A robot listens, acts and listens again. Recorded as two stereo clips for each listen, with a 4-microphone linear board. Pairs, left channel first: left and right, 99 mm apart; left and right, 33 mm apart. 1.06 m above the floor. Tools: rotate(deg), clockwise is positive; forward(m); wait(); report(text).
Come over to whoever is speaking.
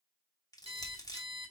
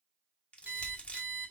rotate(65)
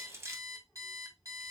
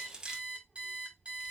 forward(1.0)
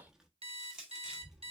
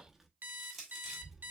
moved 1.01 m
rotate(10)
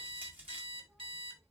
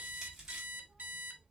forward(1.0)
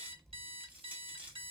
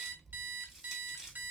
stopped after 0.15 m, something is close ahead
report("Arrived at the child speaking, straight ahead.")